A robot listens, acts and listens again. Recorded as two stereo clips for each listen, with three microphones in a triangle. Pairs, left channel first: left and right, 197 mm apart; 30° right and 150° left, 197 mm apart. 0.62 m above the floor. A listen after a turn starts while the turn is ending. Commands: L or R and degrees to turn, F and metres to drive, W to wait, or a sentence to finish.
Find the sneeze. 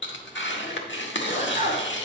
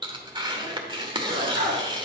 L130
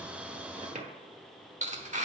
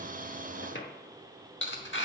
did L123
L10
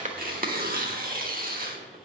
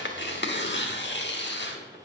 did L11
Facing where the sneeze came from. I can't hear it now.